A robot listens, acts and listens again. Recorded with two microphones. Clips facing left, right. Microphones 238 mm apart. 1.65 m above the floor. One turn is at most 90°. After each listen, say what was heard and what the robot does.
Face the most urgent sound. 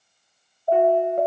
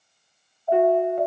The alarm: about 45° left or 135° left. Turn 45° left.
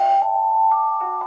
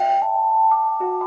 Facing the alarm, 1 to 2 m away.